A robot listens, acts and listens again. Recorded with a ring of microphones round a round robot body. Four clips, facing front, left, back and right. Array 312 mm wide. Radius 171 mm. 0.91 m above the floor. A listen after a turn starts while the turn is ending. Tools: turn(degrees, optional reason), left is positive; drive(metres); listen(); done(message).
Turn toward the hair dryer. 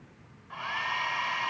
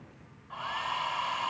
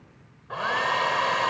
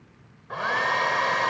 turn(degrees=-130, reason="The hair dryer: 130° right.")
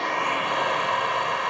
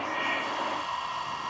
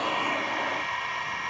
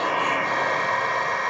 turn(degrees=-55, reason="The hair dryer is now 55° right.")
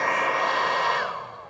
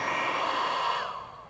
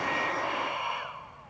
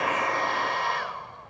done("Found it: a hair dryer, straight ahead.")